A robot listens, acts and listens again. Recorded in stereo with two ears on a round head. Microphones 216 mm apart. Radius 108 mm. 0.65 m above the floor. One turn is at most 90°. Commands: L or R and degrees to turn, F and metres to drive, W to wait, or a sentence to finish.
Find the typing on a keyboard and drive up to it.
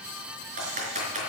R35
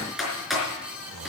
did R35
F1.0
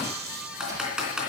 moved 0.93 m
F1.0
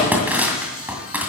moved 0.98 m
R10
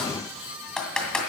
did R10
F1.0
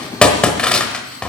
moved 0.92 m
F1.0
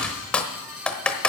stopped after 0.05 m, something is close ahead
I am next to the typing on a keyboard.